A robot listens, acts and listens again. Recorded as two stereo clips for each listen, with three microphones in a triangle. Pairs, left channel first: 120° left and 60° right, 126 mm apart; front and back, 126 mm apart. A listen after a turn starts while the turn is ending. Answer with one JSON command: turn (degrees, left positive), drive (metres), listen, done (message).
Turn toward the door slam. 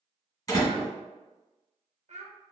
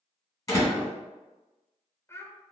{"turn": 60}
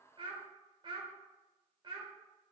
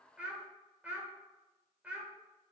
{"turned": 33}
{"turn": 25}
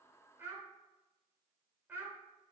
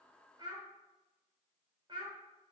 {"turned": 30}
{"done": "Facing where the door slam came from. I can't hear it now."}